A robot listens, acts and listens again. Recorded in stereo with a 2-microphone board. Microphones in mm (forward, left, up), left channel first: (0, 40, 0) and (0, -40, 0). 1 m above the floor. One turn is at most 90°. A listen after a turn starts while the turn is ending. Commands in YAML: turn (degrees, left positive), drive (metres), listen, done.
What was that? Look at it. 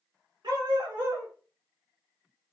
turn: -65
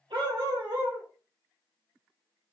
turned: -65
turn: -65
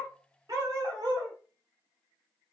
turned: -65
turn: -55
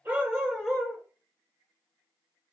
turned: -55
done: "Found it: a dog barking, straight ahead."